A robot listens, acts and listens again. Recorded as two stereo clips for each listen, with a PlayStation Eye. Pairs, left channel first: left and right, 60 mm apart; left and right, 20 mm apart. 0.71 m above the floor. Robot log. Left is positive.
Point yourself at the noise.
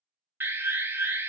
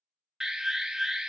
note: The alarm: about 40° right or 140° right.
cmd yaw -40
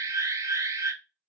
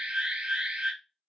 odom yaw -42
note: So it is at 90° right.
cmd yaw -90
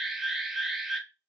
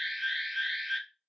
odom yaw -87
end: Found it: an alarm, straight ahead, under 1 m away.